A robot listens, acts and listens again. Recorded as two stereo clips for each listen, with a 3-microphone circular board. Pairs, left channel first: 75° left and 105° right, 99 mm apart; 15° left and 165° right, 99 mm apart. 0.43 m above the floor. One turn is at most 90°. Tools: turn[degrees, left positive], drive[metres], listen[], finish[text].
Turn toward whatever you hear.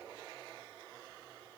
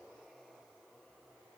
Action: listen[]
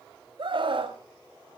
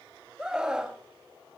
Thought: The scream: 85° right.
Action: turn[-85]
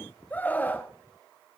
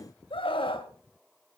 Action: finish[Facing the scream.]